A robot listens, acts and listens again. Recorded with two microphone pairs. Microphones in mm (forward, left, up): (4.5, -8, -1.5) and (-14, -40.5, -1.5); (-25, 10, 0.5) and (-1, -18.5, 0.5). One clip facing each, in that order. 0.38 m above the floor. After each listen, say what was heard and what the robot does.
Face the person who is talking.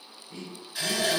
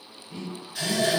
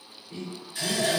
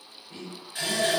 The man speaking: 85° right. Turn 85° right.
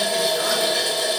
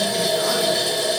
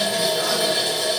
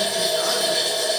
Keep listening.
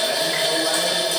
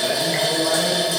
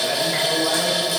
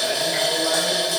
Keep listening.
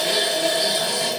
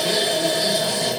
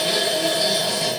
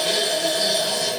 I heard a man speaking from this way, but can't make it out now.